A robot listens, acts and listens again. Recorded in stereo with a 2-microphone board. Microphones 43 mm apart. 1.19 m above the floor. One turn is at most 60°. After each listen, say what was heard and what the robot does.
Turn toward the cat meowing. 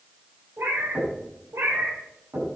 Turn 60° right.
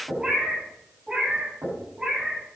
So it is at 20° right. Turn 20° right.
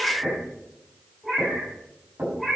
Facing the cat meowing, over 4 m away.